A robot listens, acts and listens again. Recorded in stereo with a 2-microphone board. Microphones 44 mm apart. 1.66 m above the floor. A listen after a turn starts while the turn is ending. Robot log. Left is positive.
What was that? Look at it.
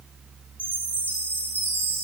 note: The chime: about 45° left or 135° left.
cmd yaw +45
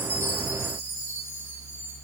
cmd idle
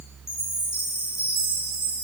note: So it is at 95° left.
cmd yaw +95
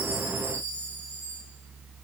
cmd idle
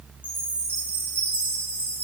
note: The chime is now 40° left.
cmd yaw +40
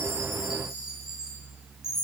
note: The chime is now 10° right.
cmd yaw -10
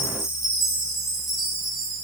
end: Facing the chime.